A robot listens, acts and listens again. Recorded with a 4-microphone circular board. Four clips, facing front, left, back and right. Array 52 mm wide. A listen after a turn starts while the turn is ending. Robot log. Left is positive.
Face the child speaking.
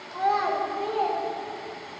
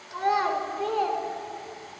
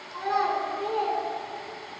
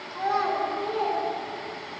note: The child speaking: 95° left.
cmd yaw +95
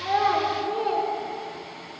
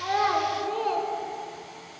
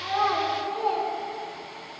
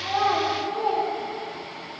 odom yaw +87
note: The child speaking is now 50° left.
cmd yaw +50
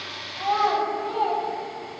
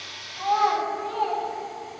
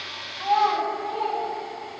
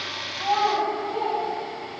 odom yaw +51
note: The child speaking is now 20° left.
cmd yaw +20
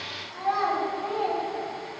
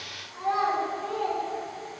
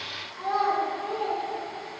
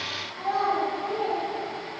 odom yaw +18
note: The child speaking is now 10° left.
cmd yaw +10
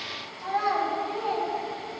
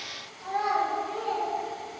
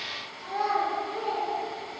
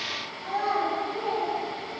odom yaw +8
end: Facing the child speaking, 2 to 4 m away.